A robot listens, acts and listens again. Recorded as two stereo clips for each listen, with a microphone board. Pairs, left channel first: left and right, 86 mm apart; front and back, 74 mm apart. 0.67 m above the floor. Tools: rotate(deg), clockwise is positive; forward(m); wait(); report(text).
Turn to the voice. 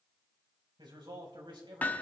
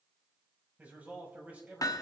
rotate(110)
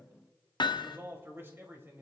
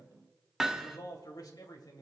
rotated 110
rotate(25)
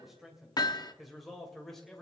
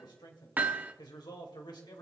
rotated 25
report("Facing the man speaking, 2 to 4 m away.")